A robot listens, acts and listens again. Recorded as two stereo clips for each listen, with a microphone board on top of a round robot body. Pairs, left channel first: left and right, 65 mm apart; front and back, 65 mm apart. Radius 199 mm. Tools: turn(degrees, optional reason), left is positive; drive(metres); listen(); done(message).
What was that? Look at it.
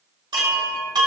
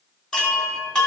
turn(degrees=-80, reason="The chime: 80° right.")
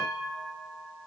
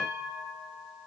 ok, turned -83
done("Facing the chime.")